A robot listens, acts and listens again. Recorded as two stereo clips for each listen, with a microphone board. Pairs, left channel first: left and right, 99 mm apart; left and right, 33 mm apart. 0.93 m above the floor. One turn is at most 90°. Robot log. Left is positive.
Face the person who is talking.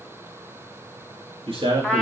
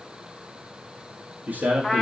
note: The man speaking: about 65° right or 115° right.
cmd yaw -65
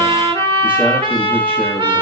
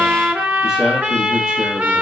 cmd idle
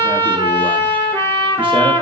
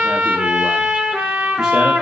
cmd idle
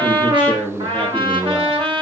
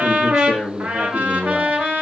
note: So it is at 15° right.
cmd yaw -15
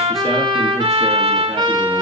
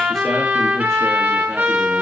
cmd idle
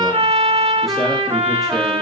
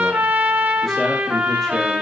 cmd idle
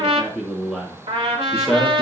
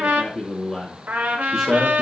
end: Facing the man speaking.